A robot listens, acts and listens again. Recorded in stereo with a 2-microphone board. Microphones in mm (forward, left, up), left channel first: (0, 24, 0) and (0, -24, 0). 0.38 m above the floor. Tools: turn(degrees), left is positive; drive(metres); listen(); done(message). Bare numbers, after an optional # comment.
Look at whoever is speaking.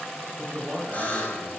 # The man speaking: about 55° right or 125° right.
turn(-55)
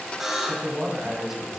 # So it is at 15° right.
turn(-15)
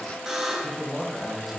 done("Facing the man speaking, 1 to 2 m away.")